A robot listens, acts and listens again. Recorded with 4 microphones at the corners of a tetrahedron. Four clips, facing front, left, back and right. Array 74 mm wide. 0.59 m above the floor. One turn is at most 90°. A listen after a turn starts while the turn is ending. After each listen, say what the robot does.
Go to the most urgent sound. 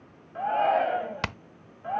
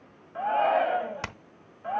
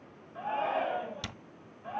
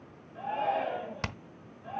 Turn 55° left.
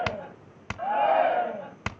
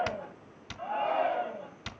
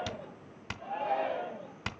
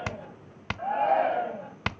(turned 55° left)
Turn 20° right.
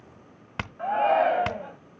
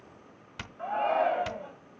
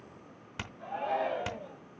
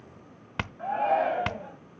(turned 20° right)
Drive 1.0 m forward.
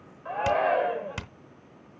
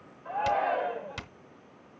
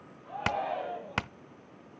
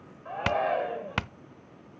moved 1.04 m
Drive 1.0 m forward.
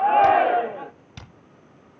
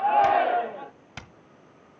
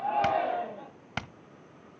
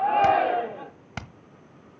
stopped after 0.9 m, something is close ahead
Arrived at the shout, straight ahead.